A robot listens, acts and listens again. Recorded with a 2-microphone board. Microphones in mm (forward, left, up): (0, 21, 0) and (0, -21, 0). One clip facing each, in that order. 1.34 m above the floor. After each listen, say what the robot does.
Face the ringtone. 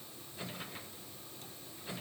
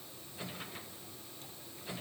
Keep listening.
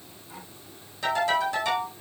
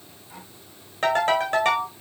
Turn 50° right.
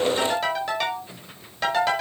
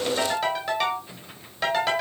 Facing the ringtone.